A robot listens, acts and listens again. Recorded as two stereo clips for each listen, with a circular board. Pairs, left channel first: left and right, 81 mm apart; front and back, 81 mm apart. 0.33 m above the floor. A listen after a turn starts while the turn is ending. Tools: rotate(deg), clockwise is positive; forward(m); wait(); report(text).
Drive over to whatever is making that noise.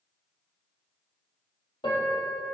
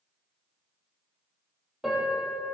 rotate(-95)
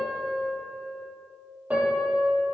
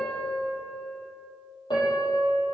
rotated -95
rotate(20)
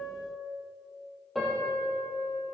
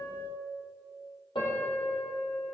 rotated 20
forward(1.0)
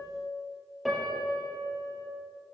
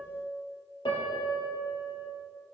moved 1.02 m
forward(1.0)
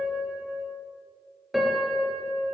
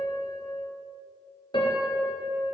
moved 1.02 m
forward(1.0)
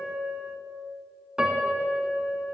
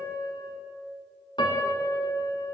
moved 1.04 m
rotate(10)
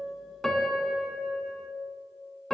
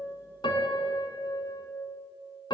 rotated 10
forward(1.0)
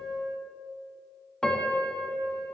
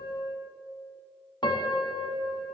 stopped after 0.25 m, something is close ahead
rotate(-10)
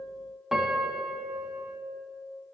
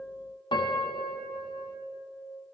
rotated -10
report("Arrived at the piano, straight ahead.")